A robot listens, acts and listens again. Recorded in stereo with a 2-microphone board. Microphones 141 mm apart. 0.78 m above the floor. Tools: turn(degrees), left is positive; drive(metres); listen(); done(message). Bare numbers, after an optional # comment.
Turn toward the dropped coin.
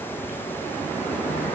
listen()
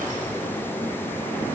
listen()
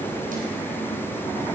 done("I can't make out a dropped coin.")